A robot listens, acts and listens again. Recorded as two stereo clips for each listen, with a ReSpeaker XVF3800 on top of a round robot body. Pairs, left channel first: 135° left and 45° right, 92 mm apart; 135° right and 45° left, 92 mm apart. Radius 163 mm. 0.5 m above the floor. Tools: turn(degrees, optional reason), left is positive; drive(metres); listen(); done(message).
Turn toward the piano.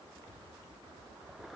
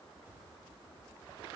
listen()
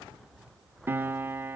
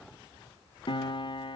turn(degrees=-110, reason="The piano: 110° right.")
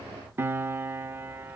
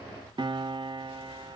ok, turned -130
turn(degrees=20, reason="The piano is now 20° left.")
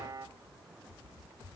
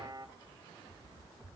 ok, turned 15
done("Found it: a piano, straight ahead.")